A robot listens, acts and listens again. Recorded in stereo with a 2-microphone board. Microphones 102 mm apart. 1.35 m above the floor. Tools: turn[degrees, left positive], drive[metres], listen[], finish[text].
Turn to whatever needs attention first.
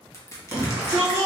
Thought: The shout: about 20° right or 160° right.
Action: turn[-20]
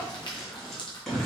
Action: finish[Facing the shout.]